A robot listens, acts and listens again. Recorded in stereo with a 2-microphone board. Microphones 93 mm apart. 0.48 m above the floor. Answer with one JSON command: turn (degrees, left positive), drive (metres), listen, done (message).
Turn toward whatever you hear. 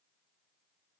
{"listen": true}
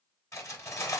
{"turn": 30}
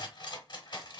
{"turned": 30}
{"turn": 115}
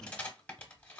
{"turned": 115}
{"turn": 15}
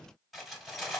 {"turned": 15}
{"done": "Found it: cutlery clinking, straight ahead."}